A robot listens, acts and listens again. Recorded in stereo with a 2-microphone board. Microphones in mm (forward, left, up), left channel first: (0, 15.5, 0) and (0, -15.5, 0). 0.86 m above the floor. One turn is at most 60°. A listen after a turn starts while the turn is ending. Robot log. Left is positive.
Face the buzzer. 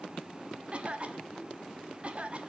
cmd idle
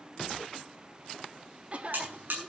cmd yaw -60
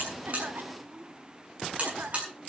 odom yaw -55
note: So it is at 35° right.
cmd yaw -35
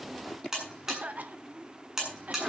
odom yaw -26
note: The buzzer is now 10° right.
cmd yaw -10
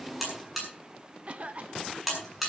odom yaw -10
end: Found it: a buzzer, straight ahead, over 4 m away.